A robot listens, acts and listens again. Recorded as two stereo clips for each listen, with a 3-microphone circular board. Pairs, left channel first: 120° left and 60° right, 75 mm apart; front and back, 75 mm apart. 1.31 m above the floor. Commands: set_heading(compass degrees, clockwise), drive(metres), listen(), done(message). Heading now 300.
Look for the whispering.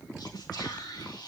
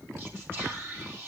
set_heading(175)
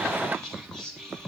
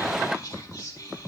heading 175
set_heading(135)
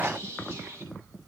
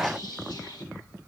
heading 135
done("Found it: whispering, straight ahead, 2 to 4 m away.")